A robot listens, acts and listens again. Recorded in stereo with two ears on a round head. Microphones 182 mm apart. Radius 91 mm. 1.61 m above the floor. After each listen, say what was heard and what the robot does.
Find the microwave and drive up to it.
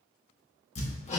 Keep listening.
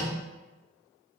Keep listening.
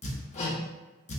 I can't make out a microwave, only hammering.